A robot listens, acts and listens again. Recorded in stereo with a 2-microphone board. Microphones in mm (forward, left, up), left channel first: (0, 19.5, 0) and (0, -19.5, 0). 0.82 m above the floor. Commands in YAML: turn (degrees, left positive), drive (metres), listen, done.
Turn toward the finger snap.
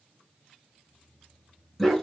listen: true
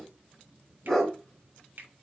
turn: -60
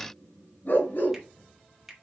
turn: -10
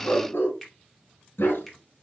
done: "Facing the finger snap, 2 to 4 m away."